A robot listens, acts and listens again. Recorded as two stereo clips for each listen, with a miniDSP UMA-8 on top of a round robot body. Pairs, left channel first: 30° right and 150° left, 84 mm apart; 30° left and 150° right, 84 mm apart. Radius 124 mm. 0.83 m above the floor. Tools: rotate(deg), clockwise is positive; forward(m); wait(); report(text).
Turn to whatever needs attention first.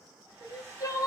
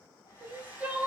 rotate(80)
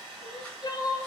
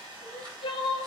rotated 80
rotate(-10)
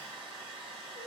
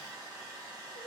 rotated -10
wait()
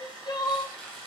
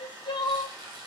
report("Found it: crying, straight ahead.")